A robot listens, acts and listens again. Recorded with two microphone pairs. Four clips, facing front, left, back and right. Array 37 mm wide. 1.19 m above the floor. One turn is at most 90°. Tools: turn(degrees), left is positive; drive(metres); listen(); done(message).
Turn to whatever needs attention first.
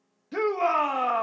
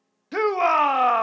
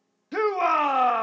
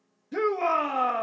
turn(degrees=90)
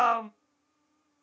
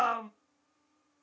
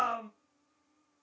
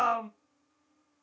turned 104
done("Found it: a shout, straight ahead, 1 to 2 m away.")